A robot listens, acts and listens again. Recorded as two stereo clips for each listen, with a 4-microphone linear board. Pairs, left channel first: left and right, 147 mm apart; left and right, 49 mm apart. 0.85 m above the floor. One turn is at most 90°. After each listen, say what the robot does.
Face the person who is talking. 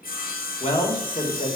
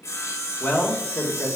Turn 45° left.
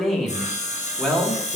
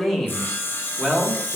Found it: a man speaking, straight ahead.